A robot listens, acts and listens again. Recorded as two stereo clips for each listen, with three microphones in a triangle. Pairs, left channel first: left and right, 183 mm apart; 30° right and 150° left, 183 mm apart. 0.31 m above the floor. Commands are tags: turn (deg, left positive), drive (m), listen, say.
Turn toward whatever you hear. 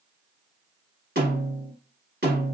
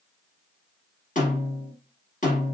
<turn deg="-70"/>
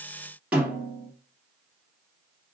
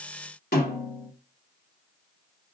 <say>Facing the snare drum, 1 to 2 m away.</say>